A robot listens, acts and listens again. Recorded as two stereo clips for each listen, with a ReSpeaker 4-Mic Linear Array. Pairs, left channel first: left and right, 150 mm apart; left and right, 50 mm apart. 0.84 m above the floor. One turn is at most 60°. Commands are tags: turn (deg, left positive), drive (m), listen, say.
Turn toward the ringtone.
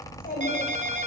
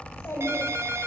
<turn deg="-55"/>
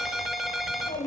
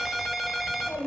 <say>Found it: a ringtone, straight ahead.</say>